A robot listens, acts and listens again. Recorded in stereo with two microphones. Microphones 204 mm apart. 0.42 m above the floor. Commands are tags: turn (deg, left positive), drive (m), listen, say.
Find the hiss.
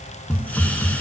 <turn deg="30"/>
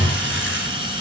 <turn deg="-25"/>
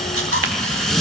<say>Found it: a hiss, straight ahead, under 1 m away.</say>